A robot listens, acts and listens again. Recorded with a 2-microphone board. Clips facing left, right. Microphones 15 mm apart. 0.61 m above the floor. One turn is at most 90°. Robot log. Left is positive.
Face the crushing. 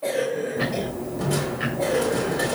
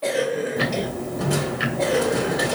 note: The crushing: about 30° right or 150° right.
cmd yaw -30
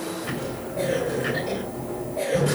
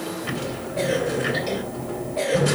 note: So it is at 120° right.
cmd yaw -90
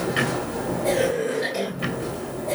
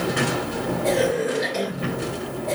note: The crushing is now 50° right.
cmd yaw -50
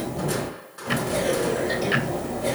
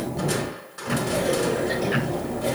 note: The crushing is now 10° right.
cmd yaw -10
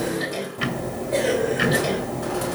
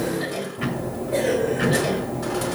end: Found it: crushing, straight ahead, 2 to 4 m away.